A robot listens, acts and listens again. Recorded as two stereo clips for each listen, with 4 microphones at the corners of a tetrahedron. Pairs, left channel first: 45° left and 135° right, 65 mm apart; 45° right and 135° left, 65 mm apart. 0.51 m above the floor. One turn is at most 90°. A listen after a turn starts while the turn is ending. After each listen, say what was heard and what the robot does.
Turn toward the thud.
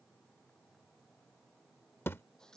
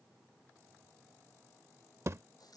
The thud: 95° left. Turn 90° left.
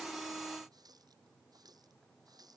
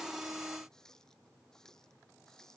Facing where the thud came from. I can't hear it now.